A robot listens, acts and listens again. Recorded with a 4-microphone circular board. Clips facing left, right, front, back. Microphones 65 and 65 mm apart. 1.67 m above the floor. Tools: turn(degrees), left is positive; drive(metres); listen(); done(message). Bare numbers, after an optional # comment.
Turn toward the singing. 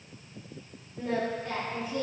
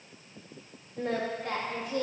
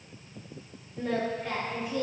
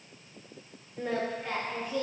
# The singing: 85° right.
turn(-85)
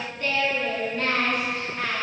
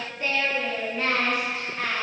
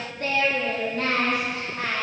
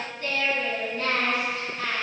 done("Found it: singing, straight ahead, 2 to 4 m away.")